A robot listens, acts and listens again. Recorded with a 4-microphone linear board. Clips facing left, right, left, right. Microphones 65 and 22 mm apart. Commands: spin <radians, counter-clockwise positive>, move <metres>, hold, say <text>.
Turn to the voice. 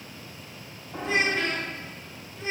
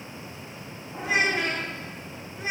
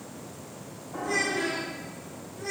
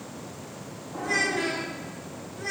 spin -0.52
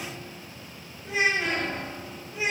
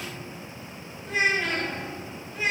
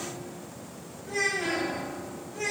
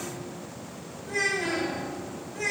spin 0.26
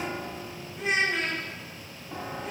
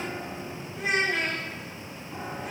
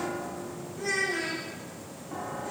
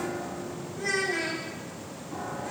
say Facing the child speaking.